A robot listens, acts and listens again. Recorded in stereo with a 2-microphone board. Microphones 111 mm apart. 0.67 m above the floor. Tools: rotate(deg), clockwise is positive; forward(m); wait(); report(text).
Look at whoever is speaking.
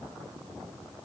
wait()
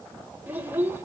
rotate(25)
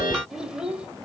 rotate(30)
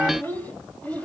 rotate(-15)
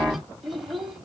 report("Facing the child speaking, 2 to 4 m away.")